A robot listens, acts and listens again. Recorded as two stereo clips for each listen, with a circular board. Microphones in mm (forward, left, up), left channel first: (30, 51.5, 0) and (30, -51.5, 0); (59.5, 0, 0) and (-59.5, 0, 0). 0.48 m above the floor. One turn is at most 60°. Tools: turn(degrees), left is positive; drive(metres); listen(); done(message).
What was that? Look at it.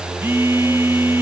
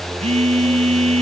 turn(degrees=-60)
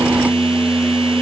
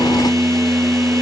turn(degrees=-60)
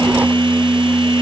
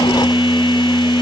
turn(degrees=-50)
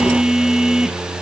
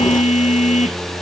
done("Found it: a phone buzzing, straight ahead.")